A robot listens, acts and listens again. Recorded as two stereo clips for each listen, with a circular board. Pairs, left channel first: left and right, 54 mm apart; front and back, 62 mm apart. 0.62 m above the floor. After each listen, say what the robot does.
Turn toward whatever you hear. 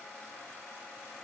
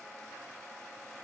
Keep listening.
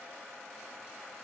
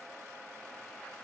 Keep listening.
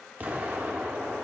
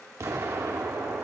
Turn 145° right.
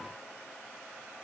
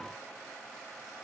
I heard an explosion from this way, but can't make it out now.